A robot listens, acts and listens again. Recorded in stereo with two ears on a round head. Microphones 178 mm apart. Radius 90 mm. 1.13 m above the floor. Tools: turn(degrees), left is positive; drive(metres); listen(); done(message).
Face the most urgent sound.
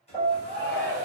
turn(degrees=50)
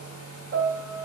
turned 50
listen()
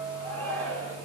turn(degrees=10)
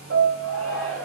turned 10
done("Facing the shout.")